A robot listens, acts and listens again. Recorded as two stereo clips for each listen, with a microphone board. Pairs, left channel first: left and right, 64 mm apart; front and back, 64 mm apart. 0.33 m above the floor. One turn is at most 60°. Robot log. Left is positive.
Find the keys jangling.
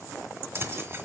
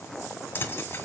note: The keys jangling: 50° right.
cmd yaw -50
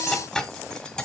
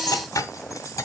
note: The keys jangling is now 15° left.
cmd yaw +15
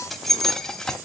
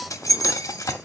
note: The keys jangling is now 10° left.
cmd yaw +10
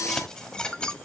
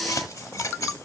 note: The keys jangling is now 15° left.
cmd yaw +15
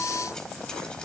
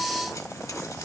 cmd idle
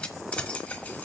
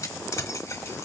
note: The keys jangling is now 30° left.
cmd yaw +30
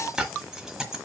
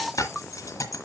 note: The keys jangling is now 10° right.
cmd yaw -10
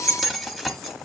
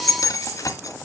end: Facing the keys jangling, 1 to 2 m away.